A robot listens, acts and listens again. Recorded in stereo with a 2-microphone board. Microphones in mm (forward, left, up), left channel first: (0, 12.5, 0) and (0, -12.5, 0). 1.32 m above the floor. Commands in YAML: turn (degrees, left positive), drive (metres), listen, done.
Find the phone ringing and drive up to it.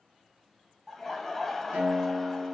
listen: true
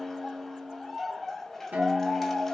listen: true
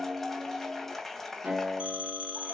turn: -45
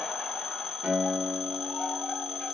drive: 1.0
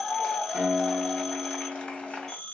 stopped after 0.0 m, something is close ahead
done: "Something is in my way. I am facing the phone ringing but have not reached it."